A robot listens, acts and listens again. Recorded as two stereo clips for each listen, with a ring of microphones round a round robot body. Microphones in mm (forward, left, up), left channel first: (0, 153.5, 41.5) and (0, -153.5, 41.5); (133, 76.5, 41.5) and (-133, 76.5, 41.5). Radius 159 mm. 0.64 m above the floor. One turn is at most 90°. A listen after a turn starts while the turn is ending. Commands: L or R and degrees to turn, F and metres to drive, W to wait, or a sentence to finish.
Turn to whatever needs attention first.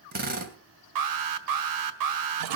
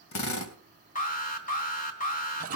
R65
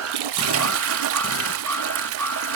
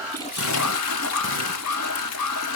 Found it: an alarm, straight ahead, 1 to 2 m away.